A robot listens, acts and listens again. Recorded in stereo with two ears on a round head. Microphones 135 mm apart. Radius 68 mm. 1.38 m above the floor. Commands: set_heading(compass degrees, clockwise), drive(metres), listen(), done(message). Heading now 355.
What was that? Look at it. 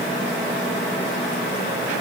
listen()
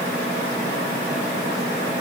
listen()
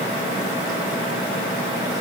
done("I can't make out anything.")